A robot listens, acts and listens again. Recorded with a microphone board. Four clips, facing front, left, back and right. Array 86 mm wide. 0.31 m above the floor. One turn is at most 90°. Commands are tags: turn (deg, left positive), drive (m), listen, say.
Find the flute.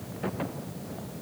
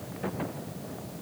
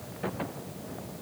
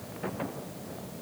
<listen/>
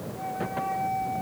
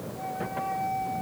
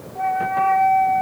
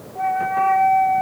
<turn deg="-90"/>
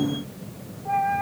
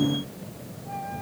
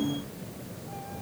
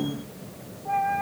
<turn deg="-30"/>
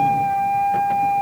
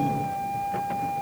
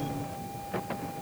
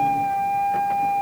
<turn deg="-25"/>
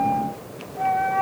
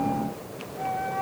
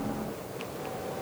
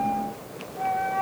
<turn deg="-10"/>
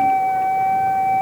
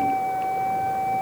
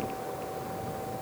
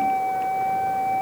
<say>Facing the flute.</say>